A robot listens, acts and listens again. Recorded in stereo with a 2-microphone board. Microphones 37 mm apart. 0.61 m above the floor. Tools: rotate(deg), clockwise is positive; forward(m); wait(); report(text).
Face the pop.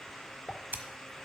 rotate(-25)
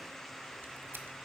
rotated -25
wait()
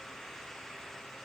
report("I heard a pop, but can't make it out now. It was about straight ahead or 130° left.")